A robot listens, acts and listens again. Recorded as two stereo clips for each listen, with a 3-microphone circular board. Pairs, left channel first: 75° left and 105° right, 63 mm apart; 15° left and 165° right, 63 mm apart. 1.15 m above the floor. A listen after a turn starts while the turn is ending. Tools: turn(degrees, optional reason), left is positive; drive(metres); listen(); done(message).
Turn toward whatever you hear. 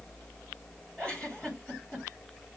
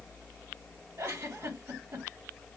turn(degrees=145, reason="The giggle: 145° left.")
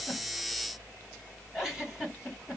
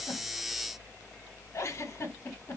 turn(degrees=-30, reason="The giggle is now 30° right.")
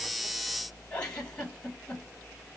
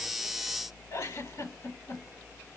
done("Found it: a giggle, straight ahead, 2 to 4 m away.")